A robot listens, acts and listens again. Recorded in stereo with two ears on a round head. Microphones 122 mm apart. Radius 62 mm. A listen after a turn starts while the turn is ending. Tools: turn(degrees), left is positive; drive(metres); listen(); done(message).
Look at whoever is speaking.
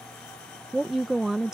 turn(degrees=-30)
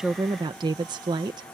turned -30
turn(degrees=-145)
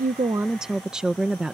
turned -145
done("Facing the woman speaking.")